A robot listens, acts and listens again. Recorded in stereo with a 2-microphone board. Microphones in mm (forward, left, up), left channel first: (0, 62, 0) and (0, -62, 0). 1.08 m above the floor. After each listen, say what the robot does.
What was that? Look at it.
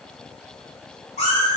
Turn 70° left.
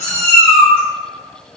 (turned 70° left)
Turn 20° left.
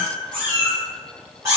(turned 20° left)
Turn 25° right.
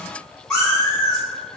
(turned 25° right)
Turn 10° left.
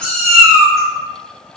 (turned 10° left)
Facing the cat meowing, 2 to 4 m away.